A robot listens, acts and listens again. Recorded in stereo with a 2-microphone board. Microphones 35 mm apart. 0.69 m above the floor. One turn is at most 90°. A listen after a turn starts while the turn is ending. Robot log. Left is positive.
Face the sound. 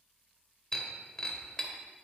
note: The breaking glass: about 20° left or 160° left.
cmd yaw +20
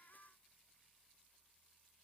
cmd idle
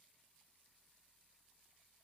end: I heard breaking glass, but can't make it out now. It was about straight ahead or 140° left.